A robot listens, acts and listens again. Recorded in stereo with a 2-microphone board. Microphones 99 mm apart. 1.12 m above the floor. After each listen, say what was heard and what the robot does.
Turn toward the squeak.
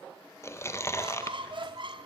The squeak: about 55° right or 125° right. Turn 55° right.
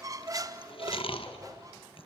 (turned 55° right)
So it is at 45° right. Turn 45° right.
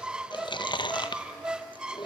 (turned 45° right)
The squeak is now 10° right. Turn 10° right.
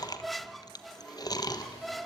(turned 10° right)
Found it: a squeak, straight ahead.